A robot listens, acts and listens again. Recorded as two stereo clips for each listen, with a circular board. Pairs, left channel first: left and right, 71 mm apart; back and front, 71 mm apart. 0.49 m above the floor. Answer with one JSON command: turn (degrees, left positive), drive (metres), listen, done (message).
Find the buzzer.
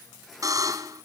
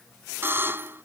{"turn": -55}
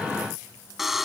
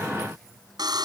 {"done": "Found it: a buzzer, straight ahead."}